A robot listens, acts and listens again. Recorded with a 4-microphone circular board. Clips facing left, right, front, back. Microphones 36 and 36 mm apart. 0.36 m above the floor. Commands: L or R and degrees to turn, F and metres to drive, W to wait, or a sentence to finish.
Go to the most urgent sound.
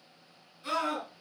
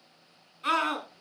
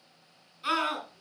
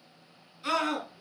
R75
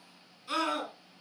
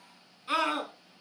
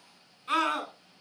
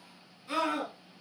R30
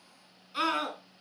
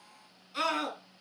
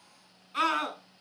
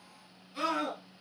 L10
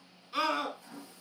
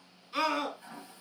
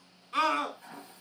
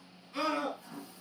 F1.0
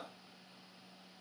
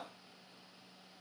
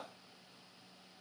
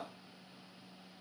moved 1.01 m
W
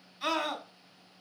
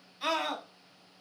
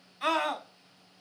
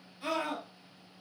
F1.0
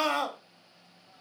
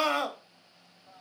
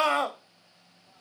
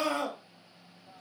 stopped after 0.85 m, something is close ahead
R10
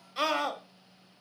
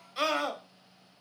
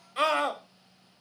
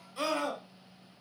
I am next to the scream.